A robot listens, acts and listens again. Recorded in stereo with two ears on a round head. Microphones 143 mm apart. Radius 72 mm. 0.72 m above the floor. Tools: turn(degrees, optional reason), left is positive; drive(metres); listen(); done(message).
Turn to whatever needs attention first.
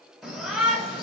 turn(degrees=30)
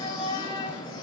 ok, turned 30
turn(degrees=150, reason="So it is at 150° left.")
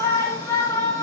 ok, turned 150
turn(degrees=15, reason="The shout is now 15° left.")
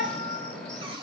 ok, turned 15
done("Found it: a shout, straight ahead.")